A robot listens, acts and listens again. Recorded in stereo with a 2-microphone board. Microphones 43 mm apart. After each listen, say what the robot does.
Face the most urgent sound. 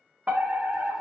Turn 40° right.
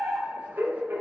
Turn 100° right.
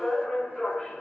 Turn 15° left.
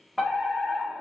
Facing the fire alarm, 2 to 4 m away.